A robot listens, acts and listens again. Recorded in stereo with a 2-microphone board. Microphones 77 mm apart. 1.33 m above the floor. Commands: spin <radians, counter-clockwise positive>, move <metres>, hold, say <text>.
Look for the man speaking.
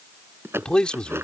spin 0.52
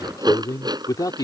spin 2.18
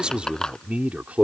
spin -0.35
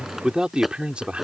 spin -0.26
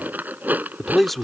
say Found it: a man speaking, straight ahead.